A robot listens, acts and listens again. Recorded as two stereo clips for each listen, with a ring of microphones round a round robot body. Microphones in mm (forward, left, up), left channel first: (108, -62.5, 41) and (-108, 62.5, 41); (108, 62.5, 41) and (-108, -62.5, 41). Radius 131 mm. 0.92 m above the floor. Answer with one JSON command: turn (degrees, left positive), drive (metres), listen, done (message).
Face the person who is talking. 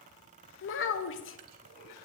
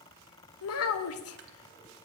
{"done": "Facing the child speaking, under 1 m away."}